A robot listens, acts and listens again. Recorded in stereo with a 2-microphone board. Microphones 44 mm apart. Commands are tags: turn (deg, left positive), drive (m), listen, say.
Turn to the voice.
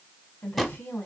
<turn deg="40"/>
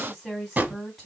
<say>Found it: a woman speaking, straight ahead, 2 to 4 m away.</say>